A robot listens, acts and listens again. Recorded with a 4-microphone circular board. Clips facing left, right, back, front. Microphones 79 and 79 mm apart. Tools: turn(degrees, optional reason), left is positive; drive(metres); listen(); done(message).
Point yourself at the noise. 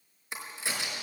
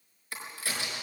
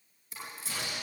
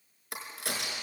turn(degrees=20, reason="The crack: 20° left.")
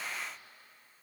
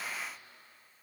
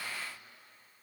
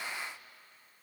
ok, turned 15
done("Facing where the crack came from. I can't hear it now.")